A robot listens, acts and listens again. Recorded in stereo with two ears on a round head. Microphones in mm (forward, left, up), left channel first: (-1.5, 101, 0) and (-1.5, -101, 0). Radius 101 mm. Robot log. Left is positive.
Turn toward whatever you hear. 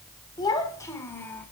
cmd yaw +30
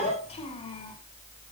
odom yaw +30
note: So it is at 155° left.
cmd yaw +155
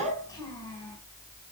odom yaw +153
note: The child speaking is now 20° left.
cmd yaw +20
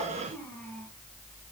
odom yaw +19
note: The child speaking is now 10° left.
cmd yaw +10
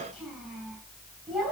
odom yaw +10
end: Facing the child speaking.